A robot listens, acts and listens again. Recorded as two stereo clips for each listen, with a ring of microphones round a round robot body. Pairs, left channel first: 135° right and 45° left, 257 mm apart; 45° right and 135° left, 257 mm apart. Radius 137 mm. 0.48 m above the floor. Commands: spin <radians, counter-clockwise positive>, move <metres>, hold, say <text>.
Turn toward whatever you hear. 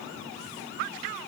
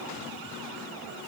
hold
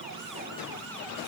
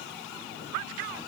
hold
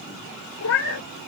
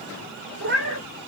spin -3.05
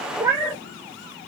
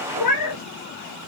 spin -0.70
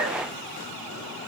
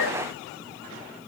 hold
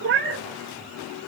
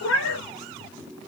say Found it: a cat meowing, straight ahead.